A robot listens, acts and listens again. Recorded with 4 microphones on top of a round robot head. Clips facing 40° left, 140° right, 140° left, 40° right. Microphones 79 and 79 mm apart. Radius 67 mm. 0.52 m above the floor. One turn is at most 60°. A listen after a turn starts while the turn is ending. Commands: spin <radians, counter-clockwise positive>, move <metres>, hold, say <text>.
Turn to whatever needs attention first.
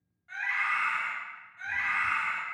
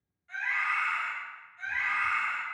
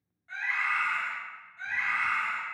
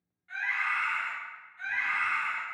spin 1.05
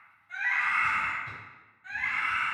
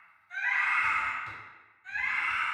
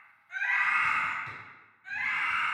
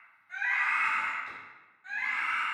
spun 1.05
spin 0.26
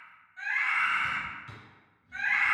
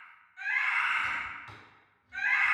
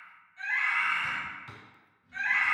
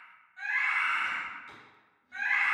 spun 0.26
say Facing the scream, 1 to 2 m away.